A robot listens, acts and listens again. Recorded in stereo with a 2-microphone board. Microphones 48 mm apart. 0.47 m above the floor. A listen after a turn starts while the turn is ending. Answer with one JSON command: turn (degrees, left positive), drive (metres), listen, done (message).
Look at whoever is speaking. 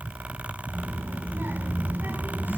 {"turn": -45}
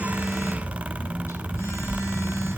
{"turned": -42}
{"done": "Facing the child speaking."}